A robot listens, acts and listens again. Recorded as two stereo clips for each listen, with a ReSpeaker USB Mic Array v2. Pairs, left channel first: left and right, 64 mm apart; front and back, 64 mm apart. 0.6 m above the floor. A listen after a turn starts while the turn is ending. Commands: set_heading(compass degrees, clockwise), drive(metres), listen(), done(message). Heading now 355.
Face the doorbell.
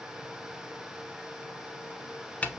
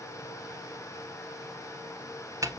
listen()
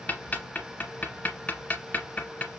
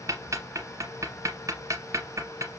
listen()
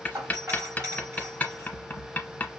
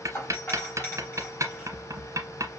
set_heading(50)
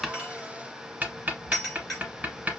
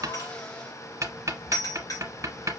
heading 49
done("Found it: a doorbell, straight ahead, 2 to 4 m away.")